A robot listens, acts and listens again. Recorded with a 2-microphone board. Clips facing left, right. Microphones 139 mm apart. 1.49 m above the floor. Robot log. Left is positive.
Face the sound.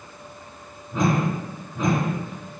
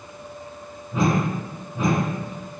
cmd yaw -30
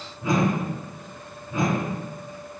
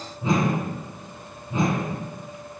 note: So it is at 150° right.
cmd yaw -150
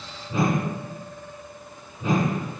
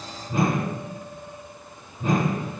note: The whoosh is now 55° right.
cmd yaw -55
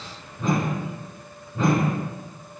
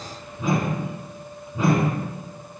note: The whoosh is now 10° right.
cmd yaw -10
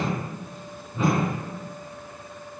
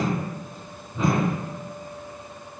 end: Facing the whoosh.